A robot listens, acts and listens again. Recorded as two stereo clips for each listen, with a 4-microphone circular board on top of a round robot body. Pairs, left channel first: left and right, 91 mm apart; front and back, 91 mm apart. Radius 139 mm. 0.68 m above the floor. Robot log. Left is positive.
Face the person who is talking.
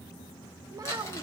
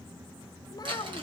note: The child speaking: 45° right.
cmd yaw -45
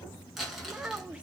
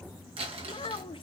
note: The child speaking is now 10° right.
cmd yaw -10
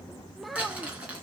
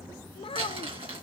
end: Facing the child speaking.